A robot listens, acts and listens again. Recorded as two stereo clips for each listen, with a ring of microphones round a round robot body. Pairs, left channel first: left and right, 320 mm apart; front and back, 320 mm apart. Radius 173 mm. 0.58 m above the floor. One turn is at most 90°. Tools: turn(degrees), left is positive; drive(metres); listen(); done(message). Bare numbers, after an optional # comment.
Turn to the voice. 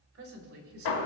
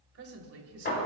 # The woman speaking: 140° right.
turn(-90)
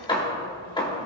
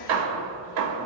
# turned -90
# Nothing new. It was at 50° right.
turn(-50)
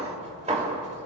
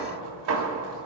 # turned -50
listen()
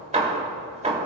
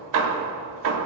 done("Facing where the woman speaking came from. I can't hear it now.")